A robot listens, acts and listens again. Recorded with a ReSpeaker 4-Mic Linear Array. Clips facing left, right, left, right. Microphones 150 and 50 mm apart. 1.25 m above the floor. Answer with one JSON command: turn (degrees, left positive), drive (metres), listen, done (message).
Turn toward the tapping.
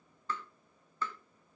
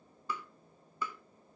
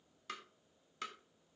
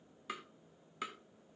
{"turn": -30}
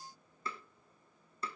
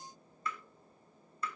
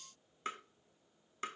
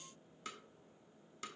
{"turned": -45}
{"turn": 35}
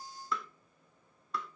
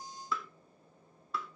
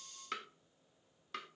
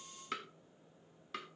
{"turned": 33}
{"done": "Found it: tapping, straight ahead."}